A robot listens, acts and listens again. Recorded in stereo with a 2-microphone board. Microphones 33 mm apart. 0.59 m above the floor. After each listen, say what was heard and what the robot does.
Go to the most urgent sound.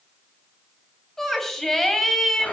Turn 30° left.
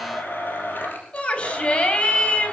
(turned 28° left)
So it is at 140° left. Turn 140° left.
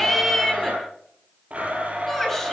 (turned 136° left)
Drive 1.0 m forward.
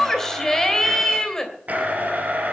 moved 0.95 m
The shout is now 10° left. Turn 10° left.
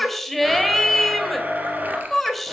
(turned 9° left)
Drive 1.0 m forward.
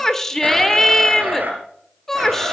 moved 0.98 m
The shout is now 10° left. Turn 10° left.
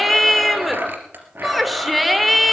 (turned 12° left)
Drive 1.0 m forward.
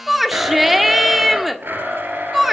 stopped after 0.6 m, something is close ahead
I am next to the shout.